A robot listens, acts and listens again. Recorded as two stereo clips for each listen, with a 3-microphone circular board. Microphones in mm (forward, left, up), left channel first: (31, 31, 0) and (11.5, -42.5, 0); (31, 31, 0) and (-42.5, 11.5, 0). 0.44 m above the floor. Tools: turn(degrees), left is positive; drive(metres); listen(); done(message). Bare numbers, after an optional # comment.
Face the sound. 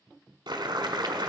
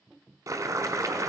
# The boiling: 120° right.
turn(-120)
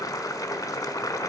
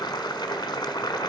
# The boiling is now 35° left.
turn(35)
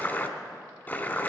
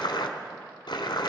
# The boiling is now 10° left.
turn(10)
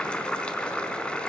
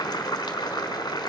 done("Facing the boiling, 1 to 2 m away.")